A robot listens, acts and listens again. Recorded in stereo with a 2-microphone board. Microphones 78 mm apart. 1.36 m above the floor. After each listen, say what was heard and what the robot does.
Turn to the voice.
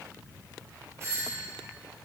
Keep listening.
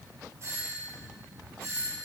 Keep listening.
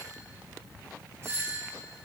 I can't make out anyone speaking to turn to.